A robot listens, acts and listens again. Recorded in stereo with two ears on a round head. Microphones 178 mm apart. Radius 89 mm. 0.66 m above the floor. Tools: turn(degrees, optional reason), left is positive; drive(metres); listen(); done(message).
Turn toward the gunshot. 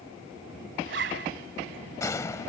turn(degrees=15, reason="The gunshot: about 15° left or 165° left.")
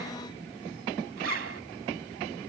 listen()
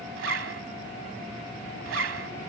done("I heard a gunshot, but can't make it out now. It was about straight ahead or 150° left.")